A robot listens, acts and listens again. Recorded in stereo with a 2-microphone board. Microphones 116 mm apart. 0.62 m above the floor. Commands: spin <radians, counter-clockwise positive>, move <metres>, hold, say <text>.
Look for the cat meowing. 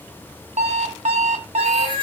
spin -0.87
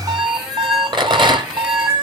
say Found it: a cat meowing, straight ahead, 2 to 4 m away.